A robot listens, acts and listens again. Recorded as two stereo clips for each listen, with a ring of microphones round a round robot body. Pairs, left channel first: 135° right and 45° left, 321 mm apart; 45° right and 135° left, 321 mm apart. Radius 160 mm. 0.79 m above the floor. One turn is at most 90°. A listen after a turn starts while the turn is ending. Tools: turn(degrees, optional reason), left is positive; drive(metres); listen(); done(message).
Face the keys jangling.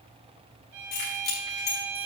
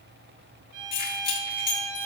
turn(degrees=-90, reason="The keys jangling: 110° right.")
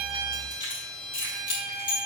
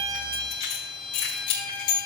turn(degrees=-60, reason="The keys jangling is now 60° right.")
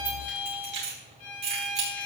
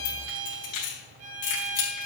turn(degrees=-15, reason="The keys jangling is now 15° right.")
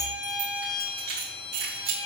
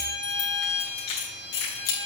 done("Facing the keys jangling.")